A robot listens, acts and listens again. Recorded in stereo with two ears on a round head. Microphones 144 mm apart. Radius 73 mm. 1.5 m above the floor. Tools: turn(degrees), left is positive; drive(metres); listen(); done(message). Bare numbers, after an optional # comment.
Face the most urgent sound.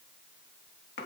listen()
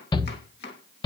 # The shout: about 30° left or 150° left.
turn(30)
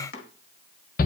# So it is at 120° left.
turn(120)
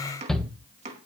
done("Facing the shout, 1 to 2 m away.")